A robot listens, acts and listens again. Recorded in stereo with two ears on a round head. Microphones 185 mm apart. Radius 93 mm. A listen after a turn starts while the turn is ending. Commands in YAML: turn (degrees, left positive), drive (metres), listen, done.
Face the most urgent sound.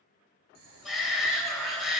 turn: 30
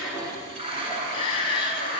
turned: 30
turn: 150
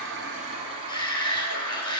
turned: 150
turn: 25
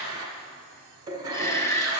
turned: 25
turn: 15
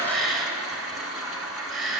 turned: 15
done: "Facing the shout, 1 to 2 m away."